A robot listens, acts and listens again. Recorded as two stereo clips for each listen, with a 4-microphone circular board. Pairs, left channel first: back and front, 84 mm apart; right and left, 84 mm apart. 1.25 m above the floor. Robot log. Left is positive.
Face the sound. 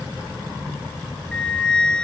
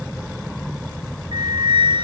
note: The flute: 100° left.
cmd yaw +100
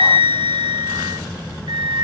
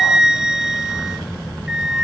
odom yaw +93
end: Facing the flute, under 1 m away.